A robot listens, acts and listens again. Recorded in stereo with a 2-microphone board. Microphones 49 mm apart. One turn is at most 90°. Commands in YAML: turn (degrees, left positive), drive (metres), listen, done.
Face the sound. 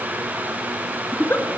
turn: 50
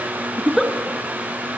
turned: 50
done: "Facing the giggle, 2 to 4 m away."